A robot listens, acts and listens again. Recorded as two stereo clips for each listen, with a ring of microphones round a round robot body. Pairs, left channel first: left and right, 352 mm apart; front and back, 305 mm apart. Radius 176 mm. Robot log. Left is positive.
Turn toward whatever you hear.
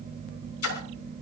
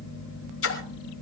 note: The splash: 40° left.
cmd yaw +40
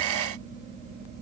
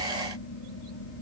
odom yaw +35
end: Facing where the splash came from. I can't hear it now.